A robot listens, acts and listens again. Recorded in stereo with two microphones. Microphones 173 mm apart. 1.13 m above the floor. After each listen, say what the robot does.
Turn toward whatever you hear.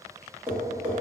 Turn 30° right.
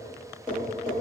Turn 20° left.
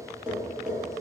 Facing the tapping.